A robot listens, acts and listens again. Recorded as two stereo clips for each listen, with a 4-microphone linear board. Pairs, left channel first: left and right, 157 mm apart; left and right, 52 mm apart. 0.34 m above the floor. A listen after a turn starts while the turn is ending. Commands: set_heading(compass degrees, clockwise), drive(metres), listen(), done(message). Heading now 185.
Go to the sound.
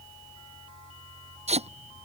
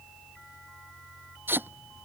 set_heading(230)
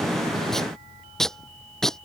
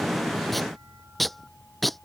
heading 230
drive(1.0)
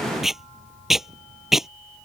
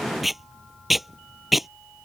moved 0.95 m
drive(1.0)
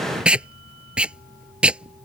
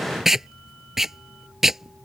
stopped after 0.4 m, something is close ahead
done("I am next to the tape being pulled.")